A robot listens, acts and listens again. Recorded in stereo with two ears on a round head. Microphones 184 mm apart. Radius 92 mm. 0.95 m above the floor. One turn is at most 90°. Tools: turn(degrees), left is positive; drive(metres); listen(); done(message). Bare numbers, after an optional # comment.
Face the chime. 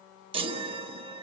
# The chime: about 25° right or 155° right.
turn(-25)
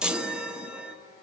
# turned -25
done("Facing the chime, 1 to 2 m away.")